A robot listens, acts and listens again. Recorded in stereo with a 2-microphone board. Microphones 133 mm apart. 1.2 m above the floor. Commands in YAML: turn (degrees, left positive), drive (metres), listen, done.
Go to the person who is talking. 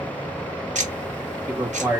turn: -15
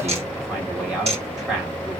drive: 1.0
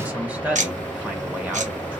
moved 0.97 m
turn: -10
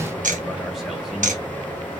listen: true
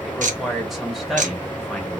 drive: 1.0
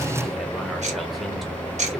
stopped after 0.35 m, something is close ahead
listen: true
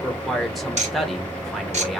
done: "I am next to the man speaking."